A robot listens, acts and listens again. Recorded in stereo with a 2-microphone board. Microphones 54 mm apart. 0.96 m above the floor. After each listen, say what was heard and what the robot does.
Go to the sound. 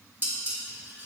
The dishes clattering: about 35° right or 145° right. Turn 35° right.
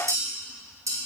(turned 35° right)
So it is at 110° right. Turn 110° right.
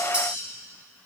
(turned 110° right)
The dishes clattering is now 20° right. Turn 20° right.
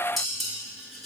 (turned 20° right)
Drive 1.0 m forward.
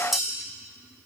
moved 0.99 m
Drive 1.0 m forward.
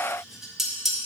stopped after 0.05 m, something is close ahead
I am next to the dishes clattering.